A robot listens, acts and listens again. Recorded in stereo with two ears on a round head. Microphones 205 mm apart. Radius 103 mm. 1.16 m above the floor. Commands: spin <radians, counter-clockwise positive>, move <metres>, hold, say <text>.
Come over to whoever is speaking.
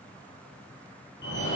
hold
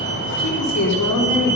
spin 1.57
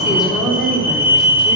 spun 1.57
move 1.0
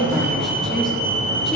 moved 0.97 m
move 1.0
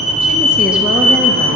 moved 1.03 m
hold
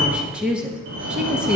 move 1.0
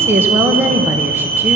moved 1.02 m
spin -0.17
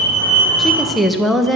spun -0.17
move 1.0
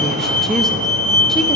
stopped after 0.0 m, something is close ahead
hold
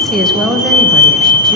say Arrived at the woman speaking, straight ahead.